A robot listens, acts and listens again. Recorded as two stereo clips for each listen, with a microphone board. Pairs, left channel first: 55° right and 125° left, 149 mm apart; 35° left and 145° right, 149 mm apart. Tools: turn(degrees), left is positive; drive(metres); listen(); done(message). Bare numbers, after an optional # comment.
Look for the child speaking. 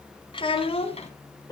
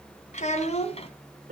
# The child speaking: 10° right.
turn(-10)
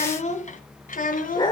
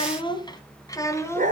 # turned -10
# The child speaking is now 40° right.
turn(-40)
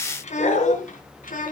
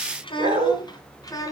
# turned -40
# The child speaking is now 35° right.
turn(-35)
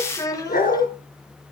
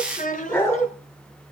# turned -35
# The child speaking is now 10° left.
turn(10)
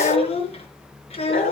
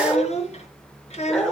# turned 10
# The child speaking is now 10° right.
turn(-10)
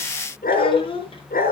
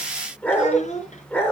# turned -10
done("Facing the child speaking.")